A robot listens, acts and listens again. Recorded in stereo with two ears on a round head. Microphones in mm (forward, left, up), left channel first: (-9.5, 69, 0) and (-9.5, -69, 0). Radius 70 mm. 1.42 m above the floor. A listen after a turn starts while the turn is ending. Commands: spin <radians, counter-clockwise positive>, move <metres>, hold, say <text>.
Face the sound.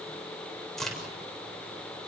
spin 0.52
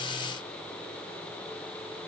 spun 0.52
hold
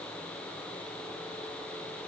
say I heard a crack, but can't make it out now. It was about 25° right or 145° left.